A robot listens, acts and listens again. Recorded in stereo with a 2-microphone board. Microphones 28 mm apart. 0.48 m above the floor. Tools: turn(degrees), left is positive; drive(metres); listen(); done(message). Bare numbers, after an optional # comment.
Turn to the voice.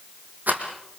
listen()
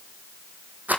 listen()
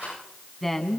turn(30)
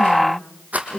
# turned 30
# So it is at 20° right.
turn(-20)
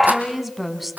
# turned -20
done("Facing the woman speaking, 2 to 4 m away.")